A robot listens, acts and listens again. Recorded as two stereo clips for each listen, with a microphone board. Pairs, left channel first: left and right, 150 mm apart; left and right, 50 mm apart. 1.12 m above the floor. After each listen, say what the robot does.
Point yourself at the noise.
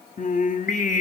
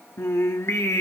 Turn 60° left.
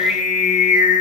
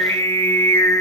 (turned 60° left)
Turn 60° left.
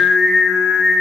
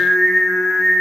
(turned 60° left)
Facing the singing.